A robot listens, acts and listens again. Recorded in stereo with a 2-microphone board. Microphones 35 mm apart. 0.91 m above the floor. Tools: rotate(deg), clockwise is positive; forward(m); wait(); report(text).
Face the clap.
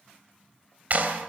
rotate(50)
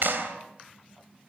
rotate(80)
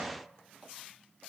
wait()
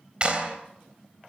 rotate(30)
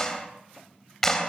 rotate(-10)
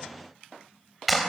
report("Found it: a clap, straight ahead.")